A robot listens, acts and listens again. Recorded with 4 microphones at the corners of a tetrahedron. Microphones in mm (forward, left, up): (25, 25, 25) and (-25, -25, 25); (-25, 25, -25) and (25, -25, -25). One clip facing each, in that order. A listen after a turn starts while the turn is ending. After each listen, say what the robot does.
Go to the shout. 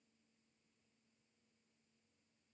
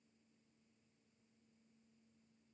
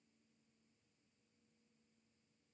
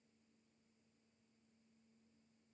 Keep listening.
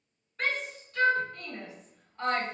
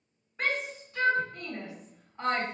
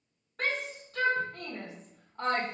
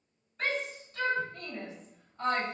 Turn 150° left.
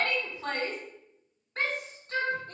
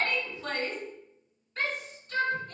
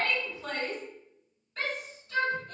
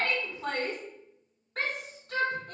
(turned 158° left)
Turn 10° right.
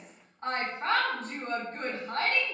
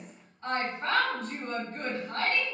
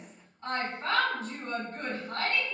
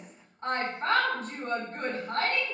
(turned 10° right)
Drive 1.0 m forward.
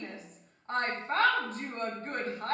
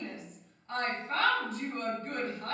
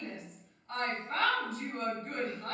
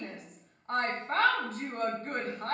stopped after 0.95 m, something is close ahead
Arrived at the shout, straight ahead.